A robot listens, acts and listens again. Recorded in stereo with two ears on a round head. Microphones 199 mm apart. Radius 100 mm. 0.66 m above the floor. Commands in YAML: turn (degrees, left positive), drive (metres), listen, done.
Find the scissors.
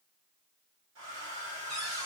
listen: true
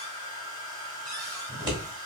turn: -20
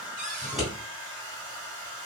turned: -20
done: "Found it: scissors, straight ahead."